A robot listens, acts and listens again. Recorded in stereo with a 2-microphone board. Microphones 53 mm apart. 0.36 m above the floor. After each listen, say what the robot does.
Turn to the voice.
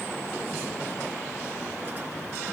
Keep listening.
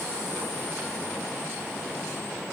Keep listening.
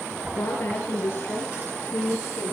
Turn 35° left.
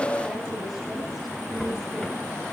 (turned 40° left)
Keep listening.
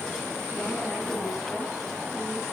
Keep listening.
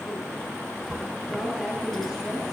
Facing the woman speaking, over 4 m away.